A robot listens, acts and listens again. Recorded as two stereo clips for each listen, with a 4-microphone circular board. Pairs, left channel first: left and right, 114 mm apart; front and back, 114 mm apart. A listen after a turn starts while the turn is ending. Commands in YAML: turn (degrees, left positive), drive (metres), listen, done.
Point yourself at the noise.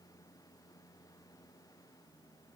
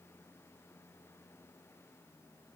listen: true
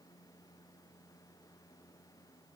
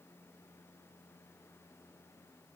listen: true
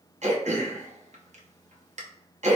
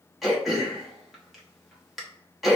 turn: -90
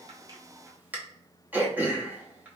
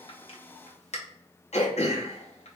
turn: -15
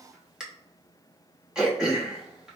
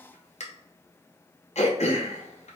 done: "Facing the throat clearing."